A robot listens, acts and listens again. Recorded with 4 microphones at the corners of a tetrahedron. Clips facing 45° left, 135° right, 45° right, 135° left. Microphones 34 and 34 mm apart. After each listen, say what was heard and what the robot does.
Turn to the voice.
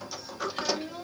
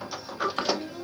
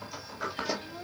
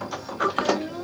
The child speaking: 115° left. Turn 115° left.
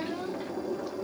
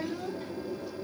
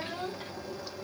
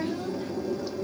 Found it: a child speaking, straight ahead.